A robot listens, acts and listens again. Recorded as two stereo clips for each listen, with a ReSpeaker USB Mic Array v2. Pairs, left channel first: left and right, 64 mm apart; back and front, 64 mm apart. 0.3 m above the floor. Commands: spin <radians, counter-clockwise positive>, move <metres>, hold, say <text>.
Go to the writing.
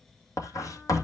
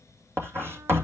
spin 0.96
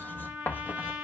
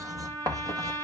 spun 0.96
spin 0.52
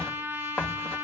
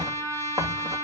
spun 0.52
spin 0.26
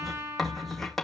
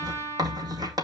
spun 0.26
move 1.0
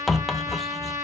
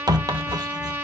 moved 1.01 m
move 1.0
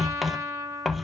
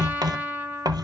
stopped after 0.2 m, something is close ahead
say Arrived at the writing, straight ahead.